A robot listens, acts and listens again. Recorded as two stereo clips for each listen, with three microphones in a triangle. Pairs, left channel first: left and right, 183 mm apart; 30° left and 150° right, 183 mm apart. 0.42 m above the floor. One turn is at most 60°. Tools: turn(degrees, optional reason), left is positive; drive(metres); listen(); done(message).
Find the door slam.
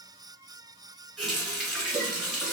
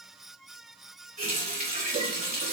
listen()
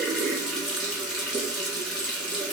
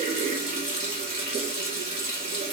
listen()
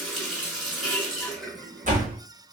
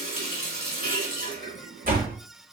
turn(degrees=-60, reason="The door slam: 125° right.")
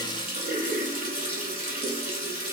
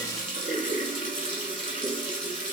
turn(degrees=-60, reason="Nothing new. It was at 65° right.")
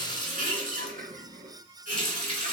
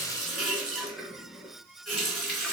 done("I heard a door slam from this way, but can't make it out now.")